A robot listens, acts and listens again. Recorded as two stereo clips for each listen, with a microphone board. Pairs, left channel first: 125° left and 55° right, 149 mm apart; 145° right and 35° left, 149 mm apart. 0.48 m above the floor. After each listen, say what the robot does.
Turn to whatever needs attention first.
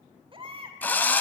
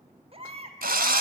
Facing the baby crying, 1 to 2 m away.